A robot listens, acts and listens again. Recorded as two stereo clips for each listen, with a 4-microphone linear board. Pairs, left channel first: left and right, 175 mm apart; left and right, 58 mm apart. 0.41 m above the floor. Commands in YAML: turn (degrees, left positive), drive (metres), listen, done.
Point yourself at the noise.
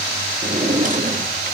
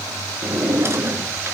turn: -50
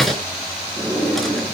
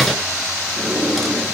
done: "Found it: a drawer, straight ahead."